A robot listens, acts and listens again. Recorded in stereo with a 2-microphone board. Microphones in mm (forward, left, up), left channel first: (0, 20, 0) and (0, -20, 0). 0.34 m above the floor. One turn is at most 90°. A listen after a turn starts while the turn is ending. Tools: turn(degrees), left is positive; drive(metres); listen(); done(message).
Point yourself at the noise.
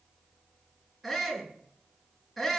turn(degrees=30)
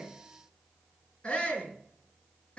turn(degrees=90)
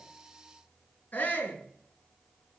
turn(degrees=55)
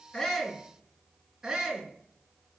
turn(degrees=-15)
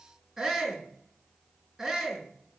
done("Facing the shout.")